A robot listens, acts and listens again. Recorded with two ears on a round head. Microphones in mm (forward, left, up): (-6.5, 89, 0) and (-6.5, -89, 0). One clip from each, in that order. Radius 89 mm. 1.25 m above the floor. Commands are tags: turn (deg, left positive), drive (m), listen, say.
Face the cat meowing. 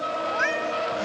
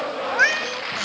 <turn deg="-50"/>
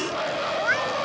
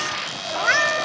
<turn deg="-70"/>
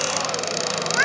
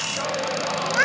<say>Found it: a cat meowing, straight ahead.</say>